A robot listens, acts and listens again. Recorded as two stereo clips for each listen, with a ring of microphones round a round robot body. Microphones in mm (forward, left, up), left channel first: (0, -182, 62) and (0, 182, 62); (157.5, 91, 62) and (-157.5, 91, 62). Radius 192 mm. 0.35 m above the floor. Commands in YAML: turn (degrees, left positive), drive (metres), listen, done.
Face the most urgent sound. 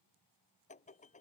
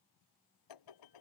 listen: true
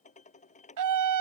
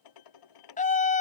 turn: 65
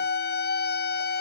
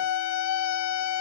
turn: -30
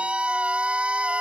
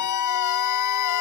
done: "Facing the scream."